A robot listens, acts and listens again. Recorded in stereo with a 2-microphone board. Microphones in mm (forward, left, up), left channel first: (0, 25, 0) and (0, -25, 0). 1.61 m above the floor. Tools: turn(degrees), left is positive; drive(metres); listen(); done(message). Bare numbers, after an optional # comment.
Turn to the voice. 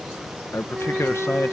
# The man speaking: about 65° left or 115° left.
turn(65)
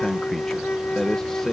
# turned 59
# So it is at 10° left.
turn(10)
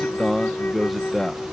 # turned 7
done("Found it: a man speaking, straight ahead.")